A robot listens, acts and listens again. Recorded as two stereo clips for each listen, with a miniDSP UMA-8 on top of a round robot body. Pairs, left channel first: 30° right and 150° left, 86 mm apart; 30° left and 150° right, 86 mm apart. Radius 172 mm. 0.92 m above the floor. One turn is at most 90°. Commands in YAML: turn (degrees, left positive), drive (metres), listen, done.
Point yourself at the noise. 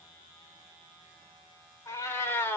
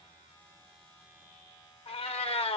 turn: 35
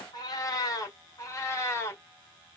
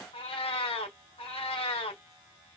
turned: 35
turn: 35
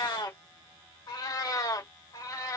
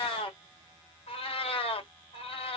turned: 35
turn: 20
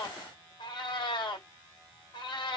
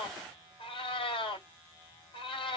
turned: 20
done: "Facing the cat meowing, 2 to 4 m away."